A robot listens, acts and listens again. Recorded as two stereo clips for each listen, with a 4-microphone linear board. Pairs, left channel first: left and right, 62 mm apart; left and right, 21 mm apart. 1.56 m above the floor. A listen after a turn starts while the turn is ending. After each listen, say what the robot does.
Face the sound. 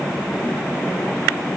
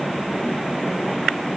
Keep listening.
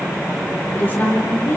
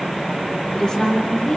Turn 35° left.
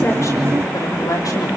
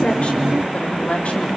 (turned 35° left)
Keep listening.
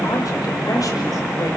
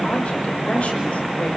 Keep listening.
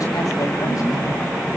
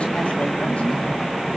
I heard a woman speaking, but can't make it out now. It was about straight ahead or 110° left.